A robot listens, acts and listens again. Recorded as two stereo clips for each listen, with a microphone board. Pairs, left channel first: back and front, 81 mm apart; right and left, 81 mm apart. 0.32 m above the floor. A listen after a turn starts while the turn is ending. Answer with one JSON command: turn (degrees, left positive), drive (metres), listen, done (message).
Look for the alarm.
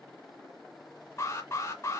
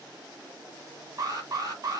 {"turn": 130}
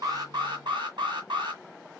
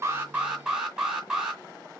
{"turn": 10}
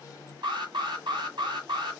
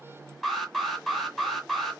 {"done": "Facing the alarm, 2 to 4 m away."}